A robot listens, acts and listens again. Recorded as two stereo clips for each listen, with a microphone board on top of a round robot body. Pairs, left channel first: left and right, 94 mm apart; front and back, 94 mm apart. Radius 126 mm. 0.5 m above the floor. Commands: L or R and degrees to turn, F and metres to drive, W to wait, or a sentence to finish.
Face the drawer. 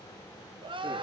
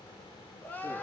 W
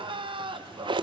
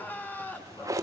R125
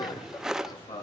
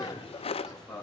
Facing the drawer.